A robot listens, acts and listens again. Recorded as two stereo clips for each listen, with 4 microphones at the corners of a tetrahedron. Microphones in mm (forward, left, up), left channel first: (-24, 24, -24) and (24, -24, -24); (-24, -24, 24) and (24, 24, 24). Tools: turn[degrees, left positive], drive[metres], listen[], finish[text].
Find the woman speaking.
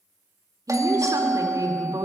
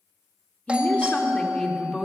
Thought: The woman speaking: 55° right.
Action: turn[-55]
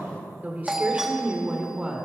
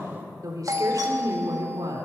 Thought: The woman speaking is now 30° left.
Action: turn[30]
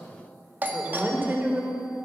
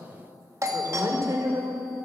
Thought: The woman speaking is now 20° left.
Action: turn[20]
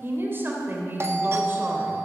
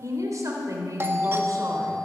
Thought: The woman speaking is now 10° left.
Action: turn[10]
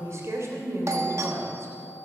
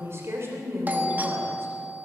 Action: finish[Facing the woman speaking.]